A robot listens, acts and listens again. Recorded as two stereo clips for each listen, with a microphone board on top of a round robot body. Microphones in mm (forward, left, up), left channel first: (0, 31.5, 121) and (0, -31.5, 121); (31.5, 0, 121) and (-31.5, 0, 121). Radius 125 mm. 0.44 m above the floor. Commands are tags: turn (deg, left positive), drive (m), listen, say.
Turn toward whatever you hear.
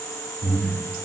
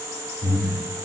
<turn deg="30"/>
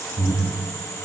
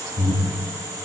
<say>Facing the breathing, under 1 m away.</say>